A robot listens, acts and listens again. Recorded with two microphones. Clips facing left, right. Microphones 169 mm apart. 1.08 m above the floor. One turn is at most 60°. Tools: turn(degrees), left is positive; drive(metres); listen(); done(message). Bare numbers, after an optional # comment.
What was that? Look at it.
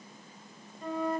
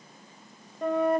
# The flute: about 60° right or 120° right.
turn(-60)
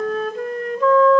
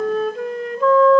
done("Facing the flute, 1 to 2 m away.")